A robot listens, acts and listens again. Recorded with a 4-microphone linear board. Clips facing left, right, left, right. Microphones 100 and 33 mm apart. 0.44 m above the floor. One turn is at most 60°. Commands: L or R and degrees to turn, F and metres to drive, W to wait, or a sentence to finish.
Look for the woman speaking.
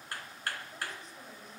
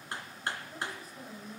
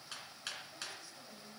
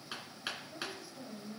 R30
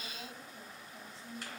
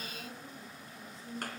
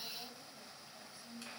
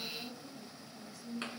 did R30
L30
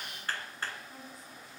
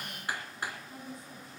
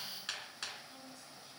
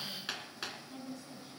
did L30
Found it: a woman speaking, straight ahead.